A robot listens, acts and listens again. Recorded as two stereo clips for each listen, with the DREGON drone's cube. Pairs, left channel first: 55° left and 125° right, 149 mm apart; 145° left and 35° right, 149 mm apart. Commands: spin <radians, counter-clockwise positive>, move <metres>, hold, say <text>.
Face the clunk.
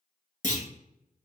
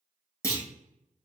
spin 1.40
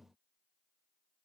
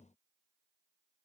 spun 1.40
say I heard a clunk from this way, but can't make it out now.